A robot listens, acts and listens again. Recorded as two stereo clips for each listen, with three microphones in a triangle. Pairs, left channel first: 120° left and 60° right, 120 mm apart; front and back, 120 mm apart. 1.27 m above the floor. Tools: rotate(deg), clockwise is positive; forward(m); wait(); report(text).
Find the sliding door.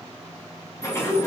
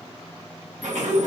rotate(175)
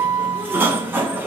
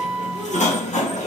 rotate(-10)
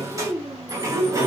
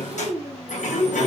report("Found it: a sliding door, straight ahead, 1 to 2 m away.")